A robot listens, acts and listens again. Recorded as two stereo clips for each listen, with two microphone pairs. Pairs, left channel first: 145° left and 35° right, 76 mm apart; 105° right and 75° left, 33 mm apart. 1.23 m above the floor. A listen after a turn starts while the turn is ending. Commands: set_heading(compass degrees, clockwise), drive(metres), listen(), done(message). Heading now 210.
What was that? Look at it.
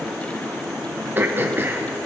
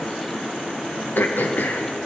set_heading(305)
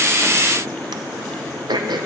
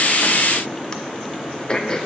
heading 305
set_heading(345)
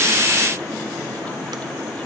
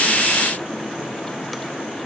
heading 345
listen()
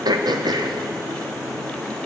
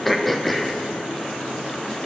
set_heading(5)
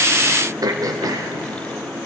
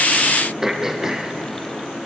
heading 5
done("Facing the throat clearing, under 1 m away.")